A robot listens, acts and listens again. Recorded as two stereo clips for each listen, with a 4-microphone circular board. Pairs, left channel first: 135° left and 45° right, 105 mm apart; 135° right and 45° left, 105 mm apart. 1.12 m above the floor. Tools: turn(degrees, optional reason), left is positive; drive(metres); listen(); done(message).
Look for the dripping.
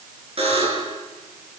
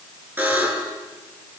listen()
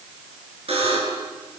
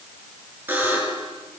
listen()
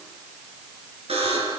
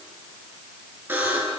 done("I can't make out dripping, only a buzzer.")